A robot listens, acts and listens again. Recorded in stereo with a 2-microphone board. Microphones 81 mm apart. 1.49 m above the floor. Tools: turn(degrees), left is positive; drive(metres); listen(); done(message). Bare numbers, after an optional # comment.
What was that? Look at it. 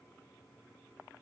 listen()
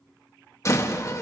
# The door slam: about 40° left or 140° left.
turn(40)
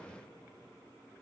listen()
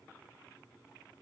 done("I heard a door slam, but can't make it out now. It was about straight ahead or 100° left.")